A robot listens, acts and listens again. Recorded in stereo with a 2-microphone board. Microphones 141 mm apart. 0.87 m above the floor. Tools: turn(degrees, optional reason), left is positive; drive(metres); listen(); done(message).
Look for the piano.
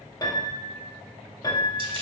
turn(degrees=30, reason="The piano: about 30° left or 150° left.")
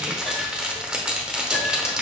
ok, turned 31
listen()
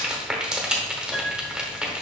done("Found it: a piano, straight ahead.")